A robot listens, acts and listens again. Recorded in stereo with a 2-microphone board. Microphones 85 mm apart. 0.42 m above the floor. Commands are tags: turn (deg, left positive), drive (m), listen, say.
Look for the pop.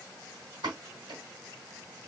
<turn deg="-65"/>
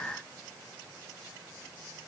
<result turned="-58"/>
<listen/>
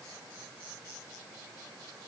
<say>I heard a pop, but can't make it out now. It was about 10° right or 55° right.</say>